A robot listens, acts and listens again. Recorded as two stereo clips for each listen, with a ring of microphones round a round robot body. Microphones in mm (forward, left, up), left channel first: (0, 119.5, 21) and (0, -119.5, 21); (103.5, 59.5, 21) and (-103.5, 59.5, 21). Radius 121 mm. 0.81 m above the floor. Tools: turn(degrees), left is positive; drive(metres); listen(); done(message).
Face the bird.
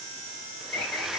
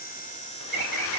turn(degrees=135)
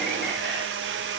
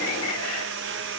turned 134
listen()
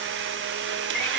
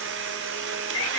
done("Found it: a bird, straight ahead.")